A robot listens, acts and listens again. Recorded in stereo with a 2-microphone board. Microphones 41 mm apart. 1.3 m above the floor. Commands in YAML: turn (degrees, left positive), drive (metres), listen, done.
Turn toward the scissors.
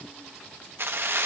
listen: true
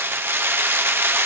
listen: true
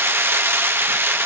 done: "I can't make out scissors to turn to."